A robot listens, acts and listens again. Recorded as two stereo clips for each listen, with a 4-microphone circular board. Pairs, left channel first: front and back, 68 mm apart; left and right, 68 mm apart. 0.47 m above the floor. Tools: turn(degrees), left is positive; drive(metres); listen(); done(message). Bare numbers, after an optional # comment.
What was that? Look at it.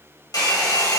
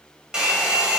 # The hair dryer: 10° right.
turn(-10)
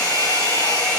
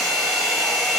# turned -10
done("Found it: a hair dryer, straight ahead.")